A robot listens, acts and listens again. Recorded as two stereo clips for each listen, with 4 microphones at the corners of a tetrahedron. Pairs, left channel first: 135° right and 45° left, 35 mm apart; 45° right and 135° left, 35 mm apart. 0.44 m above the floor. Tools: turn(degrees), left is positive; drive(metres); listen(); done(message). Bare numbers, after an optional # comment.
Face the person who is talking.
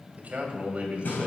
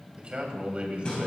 # The man speaking: 85° left.
turn(85)
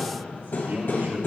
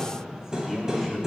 # The man speaking is now 55° left.
turn(55)
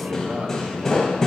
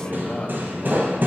done("Facing the man speaking, 2 to 4 m away.")